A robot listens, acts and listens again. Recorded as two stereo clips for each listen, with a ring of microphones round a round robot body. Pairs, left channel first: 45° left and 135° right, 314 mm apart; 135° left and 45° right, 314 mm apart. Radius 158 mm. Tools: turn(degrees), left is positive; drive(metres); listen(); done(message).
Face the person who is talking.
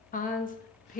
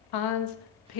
turn(degrees=110)
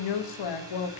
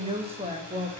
turn(degrees=30)
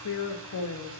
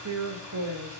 done("Found it: a woman speaking, straight ahead.")